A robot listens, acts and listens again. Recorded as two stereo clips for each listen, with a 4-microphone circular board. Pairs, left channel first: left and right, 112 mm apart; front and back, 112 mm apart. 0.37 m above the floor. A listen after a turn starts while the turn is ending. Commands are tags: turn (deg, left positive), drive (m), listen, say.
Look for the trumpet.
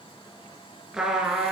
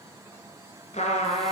<say>Facing the trumpet, 2 to 4 m away.</say>